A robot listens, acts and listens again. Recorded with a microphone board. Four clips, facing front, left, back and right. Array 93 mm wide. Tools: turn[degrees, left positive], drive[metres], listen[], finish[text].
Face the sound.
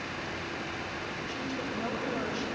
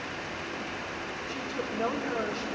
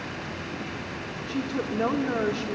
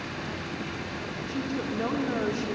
Thought: The woman speaking: 175° right.
Action: turn[-175]
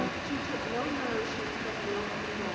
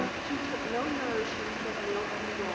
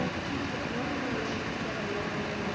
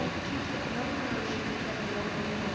Thought: The woman speaking is now 60° left.
Action: turn[60]
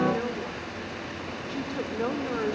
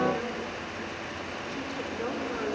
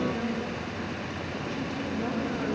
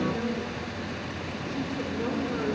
Action: finish[Found it: a woman speaking, straight ahead.]